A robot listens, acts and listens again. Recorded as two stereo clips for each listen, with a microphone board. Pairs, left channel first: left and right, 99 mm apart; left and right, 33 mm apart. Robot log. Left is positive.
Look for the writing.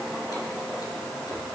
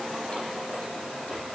cmd idle
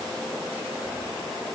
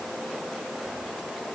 cmd idle
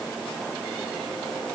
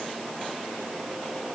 end: I can't make out writing to turn to.